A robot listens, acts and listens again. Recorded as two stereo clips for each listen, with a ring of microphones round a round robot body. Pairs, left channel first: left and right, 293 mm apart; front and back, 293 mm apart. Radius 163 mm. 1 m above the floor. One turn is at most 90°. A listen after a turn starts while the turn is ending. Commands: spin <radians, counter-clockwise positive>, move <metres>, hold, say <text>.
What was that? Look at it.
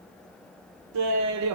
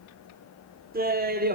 spin -1.57
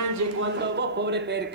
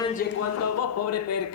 spin -0.61
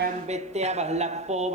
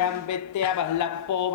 spin -0.35
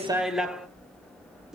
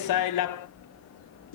say Facing the laughter.